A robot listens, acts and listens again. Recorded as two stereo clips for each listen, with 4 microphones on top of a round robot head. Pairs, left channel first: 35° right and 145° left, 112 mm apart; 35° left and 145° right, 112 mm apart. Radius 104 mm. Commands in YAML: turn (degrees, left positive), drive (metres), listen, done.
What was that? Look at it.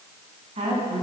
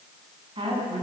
turn: 175
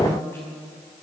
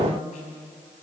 turn: 35
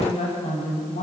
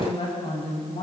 turn: -10
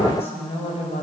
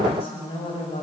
done: "Found it: a woman speaking, straight ahead."